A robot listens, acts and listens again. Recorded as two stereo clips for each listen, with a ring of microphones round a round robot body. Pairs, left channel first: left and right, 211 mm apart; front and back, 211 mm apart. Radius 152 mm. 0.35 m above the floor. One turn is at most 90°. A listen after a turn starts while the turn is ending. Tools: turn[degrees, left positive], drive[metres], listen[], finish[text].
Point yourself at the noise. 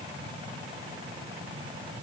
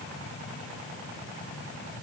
Action: listen[]
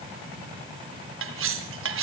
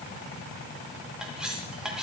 Thought: The cutlery clinking: 95° right.
Action: turn[-90]
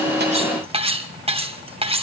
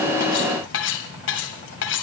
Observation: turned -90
Thought: The cutlery clinking is now 30° right.
Action: turn[-30]
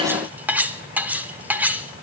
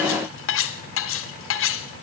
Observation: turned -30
Thought: The cutlery clinking is now 10° right.
Action: turn[-10]
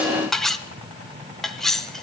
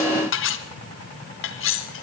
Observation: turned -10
Action: finish[Found it: cutlery clinking, straight ahead, 1 to 2 m away.]